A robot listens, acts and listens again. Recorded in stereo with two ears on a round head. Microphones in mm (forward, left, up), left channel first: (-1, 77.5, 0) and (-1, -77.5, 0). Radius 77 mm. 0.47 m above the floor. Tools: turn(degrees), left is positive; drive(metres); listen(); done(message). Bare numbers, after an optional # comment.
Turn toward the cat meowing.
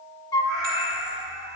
turn(-90)
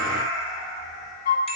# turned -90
done("Found it: a cat meowing, straight ahead, over 4 m away.")